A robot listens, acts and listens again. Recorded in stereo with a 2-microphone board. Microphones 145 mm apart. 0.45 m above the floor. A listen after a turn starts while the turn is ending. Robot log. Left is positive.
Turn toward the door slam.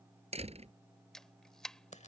note: The door slam: about 45° right or 135° right.
cmd yaw -45
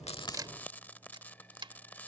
cmd idle
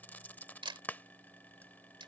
end: I heard a door slam, but can't make it out now. It was about straight ahead or 90° right.